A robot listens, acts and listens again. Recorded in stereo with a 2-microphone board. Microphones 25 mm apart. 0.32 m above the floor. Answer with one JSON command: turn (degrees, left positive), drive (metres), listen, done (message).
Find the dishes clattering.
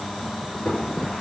{"turn": 50}
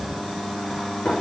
{"turn": 75}
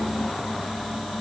{"listen": true}
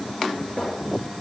{"turn": 20}
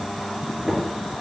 {"done": "Facing the dishes clattering, 2 to 4 m away."}